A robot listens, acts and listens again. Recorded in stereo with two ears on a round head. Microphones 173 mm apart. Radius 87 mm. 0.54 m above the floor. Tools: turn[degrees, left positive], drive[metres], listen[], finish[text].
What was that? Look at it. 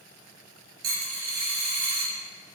Thought: The dropped coin: about 75° right or 105° right.
Action: turn[-75]
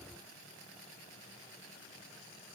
Action: listen[]
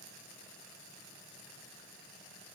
Action: finish[I heard a dropped coin, but can't make it out now. It was about straight ahead or 30° right.]